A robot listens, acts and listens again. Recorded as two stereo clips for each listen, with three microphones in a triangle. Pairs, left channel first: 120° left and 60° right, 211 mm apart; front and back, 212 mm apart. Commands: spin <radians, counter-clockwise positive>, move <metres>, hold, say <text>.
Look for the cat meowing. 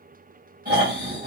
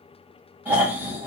hold
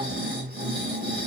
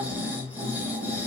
hold
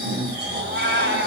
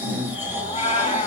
spin -1.05
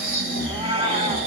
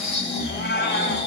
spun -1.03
say Found it: a cat meowing, straight ahead, under 1 m away.